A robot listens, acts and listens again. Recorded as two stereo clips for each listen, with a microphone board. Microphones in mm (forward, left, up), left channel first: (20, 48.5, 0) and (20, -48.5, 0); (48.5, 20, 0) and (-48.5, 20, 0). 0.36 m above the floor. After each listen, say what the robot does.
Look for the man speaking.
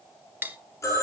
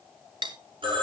Keep listening.
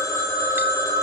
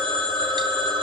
Keep listening.
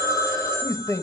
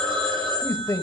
Turn 45° left.
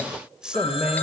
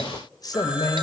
Turn 20° right.
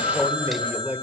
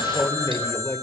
Turn 35° right.
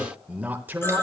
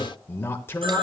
Turn 40° right.
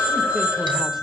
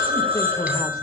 Keep listening.
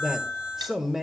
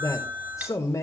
Found it: a man speaking, straight ahead.